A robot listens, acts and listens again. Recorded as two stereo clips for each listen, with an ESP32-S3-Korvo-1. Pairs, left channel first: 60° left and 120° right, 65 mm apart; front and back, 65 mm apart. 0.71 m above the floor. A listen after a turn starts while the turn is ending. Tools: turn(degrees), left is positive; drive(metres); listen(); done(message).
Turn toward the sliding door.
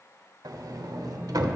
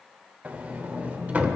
turn(degrees=-115)
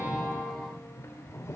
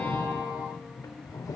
turn(degrees=20)
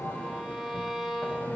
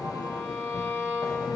done("Facing the sliding door, under 1 m away.")